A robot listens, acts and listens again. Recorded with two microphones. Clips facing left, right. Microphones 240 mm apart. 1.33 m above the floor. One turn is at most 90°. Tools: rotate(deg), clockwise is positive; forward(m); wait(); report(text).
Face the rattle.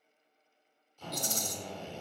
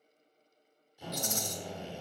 rotate(-35)
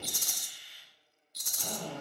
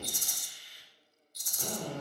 rotate(-90)
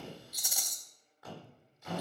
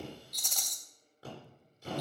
rotate(-10)
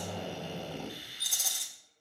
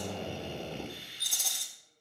report("Facing the rattle, 2 to 4 m away.")